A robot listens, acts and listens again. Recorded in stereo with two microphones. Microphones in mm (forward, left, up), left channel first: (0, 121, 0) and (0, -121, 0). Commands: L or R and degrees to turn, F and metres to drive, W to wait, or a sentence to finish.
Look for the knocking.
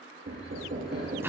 R50
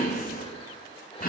W
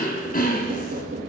R70
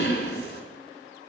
W
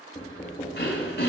L20
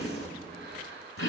Facing the knocking, 1 to 2 m away.